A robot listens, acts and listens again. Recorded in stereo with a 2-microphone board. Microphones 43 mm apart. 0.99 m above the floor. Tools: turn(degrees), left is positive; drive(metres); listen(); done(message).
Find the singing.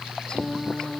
turn(degrees=20)
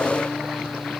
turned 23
listen()
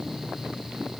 listen()
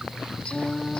turn(degrees=25)
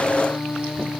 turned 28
turn(degrees=135)
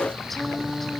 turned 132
done("Facing the singing.")